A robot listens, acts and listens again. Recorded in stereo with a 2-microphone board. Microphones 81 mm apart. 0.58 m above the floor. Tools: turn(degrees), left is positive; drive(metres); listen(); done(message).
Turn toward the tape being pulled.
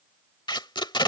turn(degrees=75)
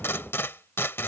turn(degrees=30)
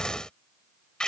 turn(degrees=10)
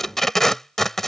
done("Found it: tape being pulled, straight ahead.")